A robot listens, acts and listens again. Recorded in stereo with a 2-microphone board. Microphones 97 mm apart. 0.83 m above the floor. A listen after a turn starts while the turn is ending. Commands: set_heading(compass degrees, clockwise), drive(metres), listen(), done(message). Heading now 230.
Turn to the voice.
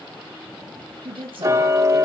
set_heading(295)
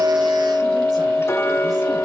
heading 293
listen()
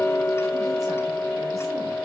listen()
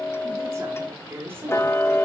set_heading(318)
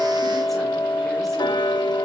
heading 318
listen()
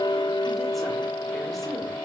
listen()
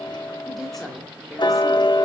done("Found it: a woman speaking, straight ahead.")